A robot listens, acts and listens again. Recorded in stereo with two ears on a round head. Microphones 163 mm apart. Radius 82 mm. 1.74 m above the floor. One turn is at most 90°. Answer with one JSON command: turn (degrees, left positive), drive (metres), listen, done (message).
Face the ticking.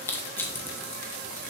{"listen": true}
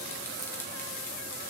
{"listen": true}
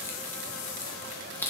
{"done": "I can't make out ticking to turn to."}